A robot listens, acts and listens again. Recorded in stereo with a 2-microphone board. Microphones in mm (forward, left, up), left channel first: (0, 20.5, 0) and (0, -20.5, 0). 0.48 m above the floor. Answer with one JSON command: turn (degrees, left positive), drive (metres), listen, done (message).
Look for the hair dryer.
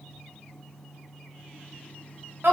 {"listen": true}
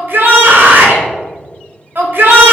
{"listen": true}
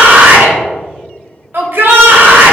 {"done": "I can't make out a hair dryer to turn to."}